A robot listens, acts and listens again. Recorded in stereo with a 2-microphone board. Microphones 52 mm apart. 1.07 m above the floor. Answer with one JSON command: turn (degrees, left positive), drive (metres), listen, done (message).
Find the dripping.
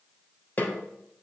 {"listen": true}
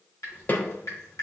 {"turn": 75}
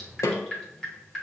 {"done": "Facing the dripping."}